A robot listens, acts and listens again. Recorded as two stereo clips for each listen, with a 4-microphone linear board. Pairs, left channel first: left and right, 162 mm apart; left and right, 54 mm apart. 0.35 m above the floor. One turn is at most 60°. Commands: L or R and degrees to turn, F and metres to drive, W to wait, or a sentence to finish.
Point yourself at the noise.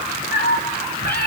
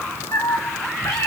L60
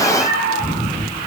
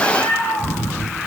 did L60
L55
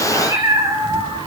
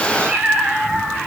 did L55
R15
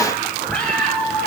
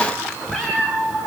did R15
Facing the cat meowing, over 4 m away.